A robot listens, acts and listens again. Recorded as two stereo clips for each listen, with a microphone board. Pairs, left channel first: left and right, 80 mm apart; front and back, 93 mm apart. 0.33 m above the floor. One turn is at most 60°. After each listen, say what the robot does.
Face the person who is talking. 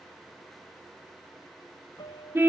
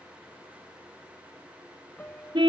Keep listening.
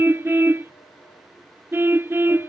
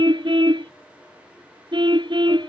Keep listening.
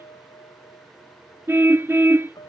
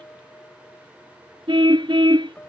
I can't make out anyone speaking to turn to.